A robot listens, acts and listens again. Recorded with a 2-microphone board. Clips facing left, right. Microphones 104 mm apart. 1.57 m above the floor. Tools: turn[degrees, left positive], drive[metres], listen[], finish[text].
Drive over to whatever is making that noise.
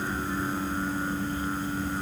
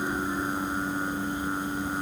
Action: listen[]
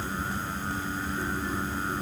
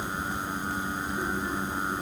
Action: listen[]
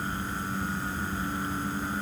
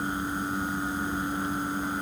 Action: finish[I can't make out anything to turn to.]